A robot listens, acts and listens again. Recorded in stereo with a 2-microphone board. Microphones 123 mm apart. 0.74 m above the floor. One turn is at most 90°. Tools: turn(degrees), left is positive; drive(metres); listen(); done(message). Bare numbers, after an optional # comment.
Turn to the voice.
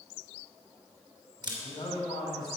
# The man speaking: about 40° left or 140° left.
turn(40)
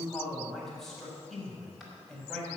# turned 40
done("Found it: a man speaking, straight ahead.")